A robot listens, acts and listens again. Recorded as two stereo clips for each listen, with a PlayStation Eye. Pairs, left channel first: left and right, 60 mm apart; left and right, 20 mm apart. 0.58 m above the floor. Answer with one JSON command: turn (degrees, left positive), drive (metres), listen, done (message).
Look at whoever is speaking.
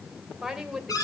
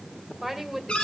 {"turn": -30}
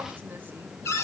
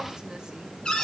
{"listen": true}
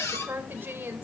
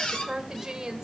{"turn": -145}
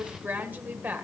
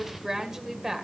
{"turn": -35}
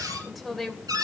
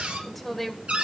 {"done": "Facing the woman speaking."}